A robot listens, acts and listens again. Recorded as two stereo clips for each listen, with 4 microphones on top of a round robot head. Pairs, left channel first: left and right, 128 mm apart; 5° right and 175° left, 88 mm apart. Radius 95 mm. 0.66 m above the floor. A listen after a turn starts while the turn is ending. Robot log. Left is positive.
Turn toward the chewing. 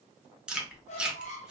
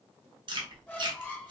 note: The chewing: 170° right.
cmd yaw -170
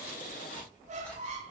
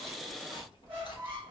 note: The chewing is now 10° left.
cmd yaw +10
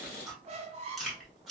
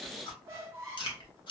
end: Found it: chewing, straight ahead, 1 to 2 m away.